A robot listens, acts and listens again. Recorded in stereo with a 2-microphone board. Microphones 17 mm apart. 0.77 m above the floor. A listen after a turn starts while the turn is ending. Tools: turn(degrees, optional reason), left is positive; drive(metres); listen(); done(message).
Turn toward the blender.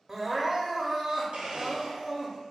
turn(degrees=-65, reason="The blender: about 65° right or 115° right.")
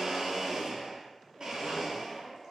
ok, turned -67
turn(degrees=-50, reason="So it is at 50° right.")
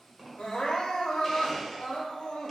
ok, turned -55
done("Facing the blender, 1 to 2 m away.")